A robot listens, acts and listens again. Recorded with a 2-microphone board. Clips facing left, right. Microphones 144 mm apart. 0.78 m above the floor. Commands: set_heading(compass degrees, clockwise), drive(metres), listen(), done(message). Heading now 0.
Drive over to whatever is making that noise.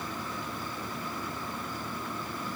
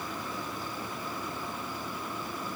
listen()
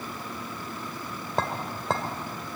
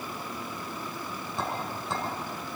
set_heading(270)
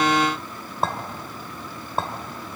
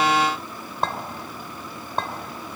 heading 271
drive(1.0)
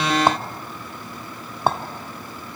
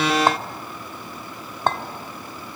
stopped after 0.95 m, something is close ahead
set_heading(261)
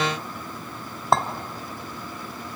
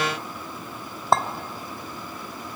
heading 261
done("I am next to the clink.")